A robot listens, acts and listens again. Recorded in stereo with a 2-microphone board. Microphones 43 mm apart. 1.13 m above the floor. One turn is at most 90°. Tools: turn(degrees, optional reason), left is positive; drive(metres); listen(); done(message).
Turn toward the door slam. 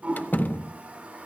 turn(degrees=45, reason="The door slam: about 45° left or 135° left.")
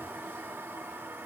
listen()
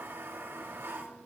done("I heard a door slam, but can't make it out now. It was about straight ahead or 90° left.")